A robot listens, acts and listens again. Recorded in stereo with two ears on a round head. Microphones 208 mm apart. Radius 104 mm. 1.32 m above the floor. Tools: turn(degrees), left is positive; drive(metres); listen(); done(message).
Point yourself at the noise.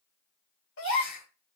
turn(degrees=55)
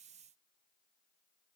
listen()
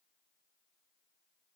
done("I heard a gasp, but can't make it out now. It was about straight ahead or 70° left.")